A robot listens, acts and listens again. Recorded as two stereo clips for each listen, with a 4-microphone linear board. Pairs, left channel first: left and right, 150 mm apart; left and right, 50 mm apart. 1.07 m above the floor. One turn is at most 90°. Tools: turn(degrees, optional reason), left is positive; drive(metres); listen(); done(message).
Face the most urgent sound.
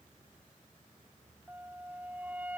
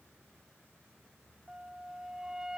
listen()
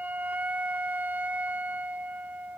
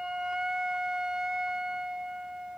listen()
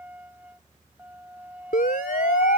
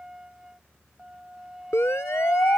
turn(degrees=90)
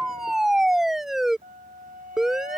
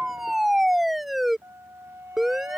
done("Found it: a siren, straight ahead.")